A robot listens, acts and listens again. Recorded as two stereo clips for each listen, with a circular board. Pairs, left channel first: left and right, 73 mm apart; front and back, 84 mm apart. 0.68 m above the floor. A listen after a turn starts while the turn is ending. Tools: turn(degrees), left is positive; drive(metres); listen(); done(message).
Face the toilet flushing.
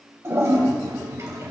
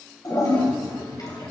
turn(degrees=-40)
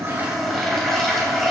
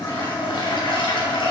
done("Facing the toilet flushing.")